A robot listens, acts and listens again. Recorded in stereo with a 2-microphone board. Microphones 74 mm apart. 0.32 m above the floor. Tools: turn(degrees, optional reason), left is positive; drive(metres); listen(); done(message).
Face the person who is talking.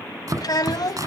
turn(degrees=55, reason="The child speaking: about 55° left or 125° left.")
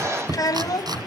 turn(degrees=60, reason="So it is at 60° left.")
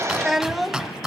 done("Facing the child speaking, 1 to 2 m away.")